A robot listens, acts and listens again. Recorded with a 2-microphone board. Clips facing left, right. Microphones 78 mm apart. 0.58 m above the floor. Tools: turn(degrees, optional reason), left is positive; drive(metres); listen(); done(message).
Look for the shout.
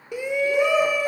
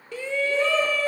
turn(degrees=15, reason="The shout: about 15° left or 165° left.")
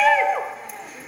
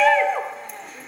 done("Facing the shout, 1 to 2 m away.")